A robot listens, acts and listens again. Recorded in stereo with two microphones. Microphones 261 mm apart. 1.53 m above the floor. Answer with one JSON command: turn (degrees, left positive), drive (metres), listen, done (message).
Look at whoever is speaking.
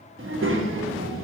{"turn": -55}
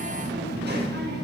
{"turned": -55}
{"turn": -55}
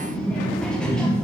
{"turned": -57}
{"done": "Facing the child speaking."}